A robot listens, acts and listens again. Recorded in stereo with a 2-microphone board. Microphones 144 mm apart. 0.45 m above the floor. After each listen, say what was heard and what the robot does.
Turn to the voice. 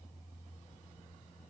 Keep listening.
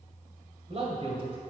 The man speaking: about 40° right or 140° right. Turn 40° right.
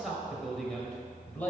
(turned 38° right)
So it is at 10° left. Turn 10° left.
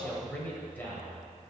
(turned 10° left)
The man speaking is now 15° left. Turn 15° left.
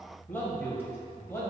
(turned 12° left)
The man speaking is now 15° left. Turn 15° left.
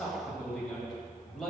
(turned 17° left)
Found it: a man speaking, straight ahead, 1 to 2 m away.